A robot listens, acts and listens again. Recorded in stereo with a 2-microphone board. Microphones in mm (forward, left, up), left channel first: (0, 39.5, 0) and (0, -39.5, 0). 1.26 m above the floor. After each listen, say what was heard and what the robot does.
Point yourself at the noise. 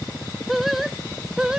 Turn 30° right.
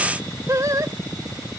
So it is at 135° right. Turn 135° right.
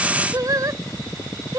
The singing is now 45° right. Turn 45° right.
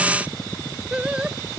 The singing is now 15° right. Turn 15° right.
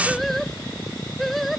Found it: singing, straight ahead.